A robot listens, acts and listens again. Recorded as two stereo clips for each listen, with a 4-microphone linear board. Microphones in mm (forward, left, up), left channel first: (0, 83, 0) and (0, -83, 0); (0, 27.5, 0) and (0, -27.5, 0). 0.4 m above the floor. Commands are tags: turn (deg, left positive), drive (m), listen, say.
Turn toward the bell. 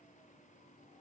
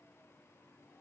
<listen/>
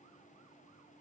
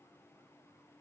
<listen/>
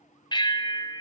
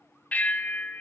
<turn deg="30"/>
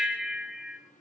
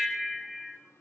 <say>Facing the bell.</say>